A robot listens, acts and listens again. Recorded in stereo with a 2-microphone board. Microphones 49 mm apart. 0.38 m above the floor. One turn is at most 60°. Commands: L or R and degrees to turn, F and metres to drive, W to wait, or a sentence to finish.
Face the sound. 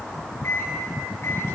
L60
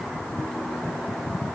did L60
W
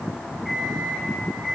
Found it: a microwave, straight ahead, 2 to 4 m away.